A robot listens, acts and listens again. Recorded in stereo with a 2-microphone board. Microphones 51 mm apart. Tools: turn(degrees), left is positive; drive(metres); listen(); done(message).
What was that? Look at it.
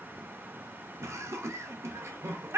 turn(degrees=-60)
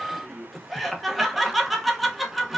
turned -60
done("Found it: laughter, straight ahead, under 1 m away.")